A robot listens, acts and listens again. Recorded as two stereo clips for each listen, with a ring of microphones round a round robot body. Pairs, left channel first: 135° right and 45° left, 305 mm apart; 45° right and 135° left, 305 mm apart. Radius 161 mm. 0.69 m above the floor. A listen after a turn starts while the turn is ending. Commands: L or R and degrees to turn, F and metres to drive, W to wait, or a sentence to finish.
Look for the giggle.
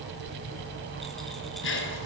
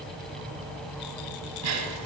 L170
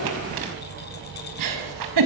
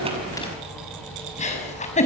L25
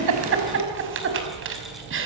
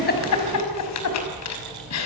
Found it: a giggle, straight ahead, over 4 m away.